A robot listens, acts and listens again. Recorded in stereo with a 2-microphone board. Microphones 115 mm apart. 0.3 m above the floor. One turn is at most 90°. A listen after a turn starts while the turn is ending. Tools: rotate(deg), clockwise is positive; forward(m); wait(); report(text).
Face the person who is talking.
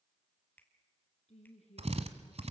rotate(-75)
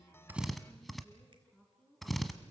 rotate(-10)
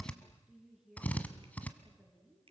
report("Facing the woman speaking, over 4 m away.")